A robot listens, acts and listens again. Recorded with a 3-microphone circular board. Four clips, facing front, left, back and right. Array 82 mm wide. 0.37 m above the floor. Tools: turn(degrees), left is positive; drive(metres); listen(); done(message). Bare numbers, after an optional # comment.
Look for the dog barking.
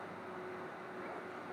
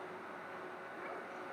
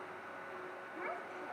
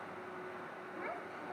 listen()
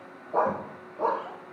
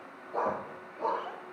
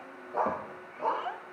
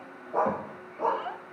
# The dog barking: 20° right.
turn(-20)
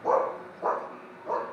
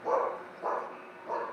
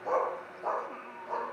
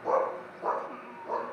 done("Found it: a dog barking, straight ahead.")